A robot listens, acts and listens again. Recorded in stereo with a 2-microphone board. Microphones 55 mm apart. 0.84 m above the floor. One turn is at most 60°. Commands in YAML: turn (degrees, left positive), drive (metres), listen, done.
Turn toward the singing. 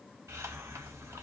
listen: true
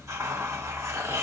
listen: true
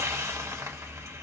done: "I can't make out singing, only a hiss."